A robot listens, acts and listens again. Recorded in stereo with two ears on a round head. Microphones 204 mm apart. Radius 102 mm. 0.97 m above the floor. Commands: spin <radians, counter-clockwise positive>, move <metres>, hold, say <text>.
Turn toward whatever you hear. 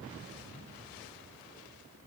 hold
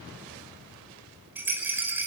spin -0.52
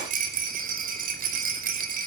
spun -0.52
spin -2.44
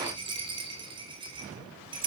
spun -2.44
spin -0.35
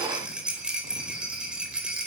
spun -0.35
say Facing the rattle, over 4 m away.